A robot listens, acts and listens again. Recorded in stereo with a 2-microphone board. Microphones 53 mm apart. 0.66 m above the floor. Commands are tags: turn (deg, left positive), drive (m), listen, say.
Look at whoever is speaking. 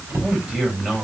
<turn deg="-20"/>
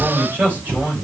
<turn deg="-140"/>
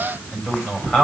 <turn deg="20"/>
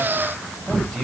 <say>Facing the man speaking, over 4 m away.</say>